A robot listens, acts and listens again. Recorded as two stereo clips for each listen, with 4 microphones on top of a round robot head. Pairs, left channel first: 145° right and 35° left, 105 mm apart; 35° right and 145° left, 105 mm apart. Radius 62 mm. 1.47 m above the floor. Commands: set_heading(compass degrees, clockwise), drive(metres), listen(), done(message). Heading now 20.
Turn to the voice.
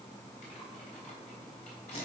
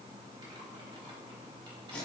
listen()
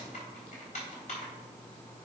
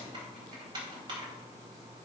listen()
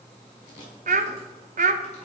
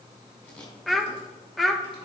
set_heading(325)
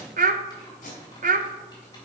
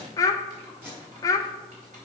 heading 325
set_heading(300)
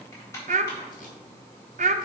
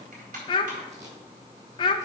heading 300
set_heading(285)
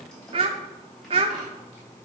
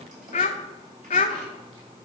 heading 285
done("Found it: a child speaking, straight ahead.")